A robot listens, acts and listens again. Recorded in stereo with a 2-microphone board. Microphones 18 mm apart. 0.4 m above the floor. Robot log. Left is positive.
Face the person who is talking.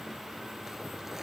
cmd idle
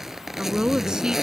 note: The woman speaking: about 55° right or 125° right.
cmd yaw -55
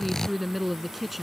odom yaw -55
end: Found it: a woman speaking, straight ahead.